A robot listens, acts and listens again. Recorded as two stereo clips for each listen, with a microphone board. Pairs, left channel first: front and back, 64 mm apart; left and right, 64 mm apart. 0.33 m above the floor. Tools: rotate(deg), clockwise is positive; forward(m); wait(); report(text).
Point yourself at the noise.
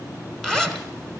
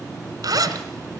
rotate(80)
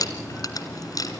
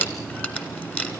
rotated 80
rotate(-25)
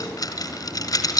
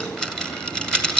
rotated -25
rotate(-10)
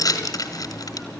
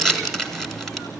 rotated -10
report("Facing the zipper.")